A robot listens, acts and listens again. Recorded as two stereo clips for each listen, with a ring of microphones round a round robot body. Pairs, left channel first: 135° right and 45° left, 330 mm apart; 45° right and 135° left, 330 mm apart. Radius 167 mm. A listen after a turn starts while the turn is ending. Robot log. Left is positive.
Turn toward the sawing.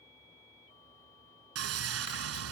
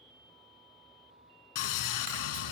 end: Found it: sawing, straight ahead.